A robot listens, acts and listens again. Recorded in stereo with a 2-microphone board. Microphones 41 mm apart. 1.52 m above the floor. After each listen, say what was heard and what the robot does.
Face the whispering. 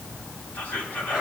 The whispering: about 40° left or 140° left. Turn 40° left.
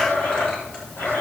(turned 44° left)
Keep listening.
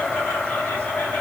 Keep listening.
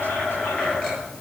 I heard whispering, but can't make it out now. It was about 5° right or 95° left.